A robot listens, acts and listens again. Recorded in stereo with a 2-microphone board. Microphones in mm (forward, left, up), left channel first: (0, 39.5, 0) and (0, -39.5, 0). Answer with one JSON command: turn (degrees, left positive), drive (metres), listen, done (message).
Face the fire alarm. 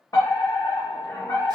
{"turn": 45}
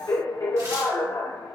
{"turn": 80}
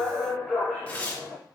{"turn": 10}
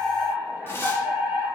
{"done": "Found it: a fire alarm, straight ahead."}